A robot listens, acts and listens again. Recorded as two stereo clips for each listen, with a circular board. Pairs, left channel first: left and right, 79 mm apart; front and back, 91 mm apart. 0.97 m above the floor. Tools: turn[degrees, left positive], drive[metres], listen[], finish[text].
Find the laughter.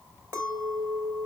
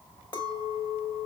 Action: listen[]
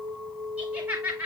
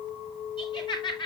Thought: The laughter: 25° right.
Action: turn[-25]
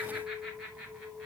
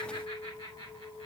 Thought: The laughter is now 10° right.
Action: turn[-10]
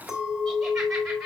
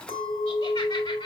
Action: listen[]
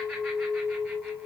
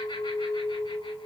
Action: listen[]
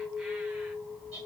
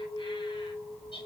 Thought: The laughter is now 10° right.
Action: turn[-10]
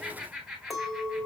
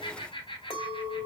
Action: finish[Found it: laughter, straight ahead.]